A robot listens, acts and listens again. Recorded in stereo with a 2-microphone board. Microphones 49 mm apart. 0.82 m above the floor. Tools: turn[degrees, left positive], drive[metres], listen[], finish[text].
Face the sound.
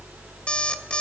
Thought: The alarm clock: about 25° left or 155° left.
Action: turn[25]
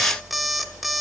Action: finish[Found it: an alarm clock, straight ahead, under 1 m away.]